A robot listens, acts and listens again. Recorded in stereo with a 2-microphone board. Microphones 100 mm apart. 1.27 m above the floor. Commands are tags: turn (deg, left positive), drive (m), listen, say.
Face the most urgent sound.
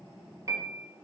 <listen/>
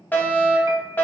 <turn deg="20"/>
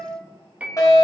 <turn deg="140"/>
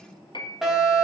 <say>Found it: a fire alarm, straight ahead, 2 to 4 m away.</say>